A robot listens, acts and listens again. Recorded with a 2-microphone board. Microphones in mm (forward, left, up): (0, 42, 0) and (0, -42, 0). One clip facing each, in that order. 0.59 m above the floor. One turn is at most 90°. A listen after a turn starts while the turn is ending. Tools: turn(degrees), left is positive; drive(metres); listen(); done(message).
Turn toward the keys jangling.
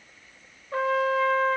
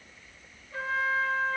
listen()
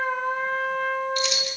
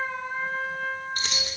turn(degrees=-40)
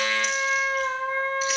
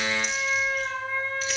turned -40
listen()
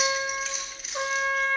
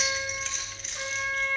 done("Found it: keys jangling, straight ahead, over 4 m away.")